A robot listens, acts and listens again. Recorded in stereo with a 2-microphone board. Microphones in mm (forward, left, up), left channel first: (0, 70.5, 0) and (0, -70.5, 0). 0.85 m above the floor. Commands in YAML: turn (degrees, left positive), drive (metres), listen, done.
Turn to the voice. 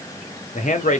turn: 65
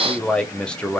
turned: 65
done: "Facing the man speaking."